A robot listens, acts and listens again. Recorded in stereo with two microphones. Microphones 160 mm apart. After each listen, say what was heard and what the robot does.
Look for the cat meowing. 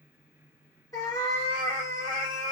The cat meowing: about 20° left or 160° left. Turn 20° left.
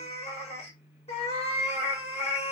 So it is at 135° left. Turn 135° left.
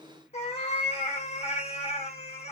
The cat meowing is now 45° left. Turn 45° left.
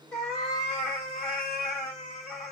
Facing the cat meowing, 1 to 2 m away.